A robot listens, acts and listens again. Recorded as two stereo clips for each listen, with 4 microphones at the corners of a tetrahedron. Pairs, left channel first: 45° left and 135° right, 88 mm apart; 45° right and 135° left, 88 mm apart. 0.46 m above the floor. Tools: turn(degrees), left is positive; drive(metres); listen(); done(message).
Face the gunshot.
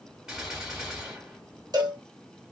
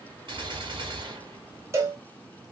turn(degrees=140)
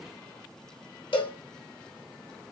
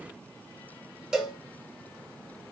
done("Facing where the gunshot came from. I can't hear it now.")